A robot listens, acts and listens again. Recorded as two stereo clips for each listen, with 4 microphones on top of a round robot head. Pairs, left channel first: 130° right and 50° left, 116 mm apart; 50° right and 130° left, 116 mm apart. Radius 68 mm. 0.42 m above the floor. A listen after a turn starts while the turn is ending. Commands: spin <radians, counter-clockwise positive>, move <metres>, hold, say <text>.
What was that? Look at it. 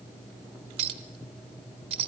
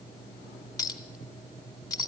spin 0.17
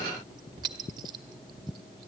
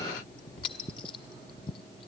say Facing the clink.